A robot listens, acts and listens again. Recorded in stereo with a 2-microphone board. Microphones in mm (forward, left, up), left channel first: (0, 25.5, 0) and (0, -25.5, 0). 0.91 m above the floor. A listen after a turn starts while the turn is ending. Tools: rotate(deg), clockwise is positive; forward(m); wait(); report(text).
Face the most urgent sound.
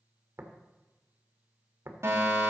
rotate(60)
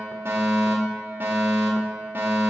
rotate(45)
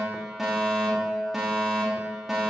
report("Found it: a fire alarm, straight ahead, 2 to 4 m away.")